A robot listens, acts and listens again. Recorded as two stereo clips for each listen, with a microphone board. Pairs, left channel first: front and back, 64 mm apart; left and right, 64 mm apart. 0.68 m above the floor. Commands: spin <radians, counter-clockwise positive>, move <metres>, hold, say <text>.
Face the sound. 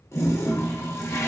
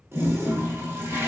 spin -0.79
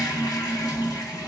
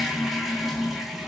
say Facing the toilet flushing.